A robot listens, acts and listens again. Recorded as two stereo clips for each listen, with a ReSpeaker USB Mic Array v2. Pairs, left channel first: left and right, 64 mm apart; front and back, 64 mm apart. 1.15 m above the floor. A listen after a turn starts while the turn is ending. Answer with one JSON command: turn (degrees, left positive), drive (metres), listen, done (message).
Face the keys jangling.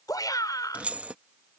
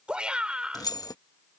{"turn": -20}
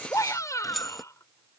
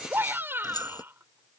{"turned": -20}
{"done": "Found it: keys jangling, straight ahead."}